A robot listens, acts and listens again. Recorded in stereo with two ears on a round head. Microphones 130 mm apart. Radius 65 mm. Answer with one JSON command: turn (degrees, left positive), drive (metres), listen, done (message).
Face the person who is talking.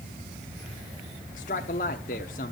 {"turn": 60}
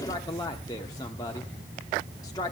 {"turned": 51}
{"turn": 30}
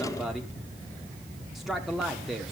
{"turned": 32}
{"done": "Found it: a man speaking, straight ahead, 1 to 2 m away."}